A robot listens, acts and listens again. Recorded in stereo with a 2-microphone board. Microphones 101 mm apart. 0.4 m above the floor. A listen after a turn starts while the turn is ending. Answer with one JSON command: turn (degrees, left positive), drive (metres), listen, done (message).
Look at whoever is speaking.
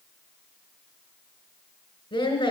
{"turn": 55}
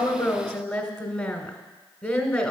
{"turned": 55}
{"turn": 15}
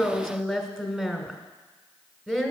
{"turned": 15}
{"done": "Facing the woman speaking."}